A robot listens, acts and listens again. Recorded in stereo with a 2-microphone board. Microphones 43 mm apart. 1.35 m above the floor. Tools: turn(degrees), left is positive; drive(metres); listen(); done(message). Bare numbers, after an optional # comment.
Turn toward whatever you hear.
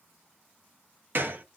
# The gunshot: about 55° right or 125° right.
turn(-55)
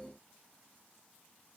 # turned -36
listen()
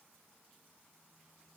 done("I heard a gunshot, but can't make it out now. It was about 15° right or 90° right.")